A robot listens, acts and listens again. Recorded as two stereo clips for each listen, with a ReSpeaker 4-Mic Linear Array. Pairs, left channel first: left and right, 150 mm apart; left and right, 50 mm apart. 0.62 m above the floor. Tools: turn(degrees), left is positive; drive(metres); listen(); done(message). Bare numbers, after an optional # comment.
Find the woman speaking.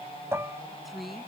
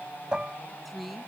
turn(30)
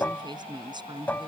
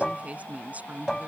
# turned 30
# So it is at 30° right.
turn(-30)
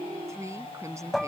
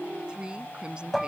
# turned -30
# The woman speaking is now 20° right.
turn(-20)
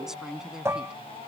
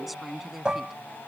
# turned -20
done("Found it: a woman speaking, straight ahead.")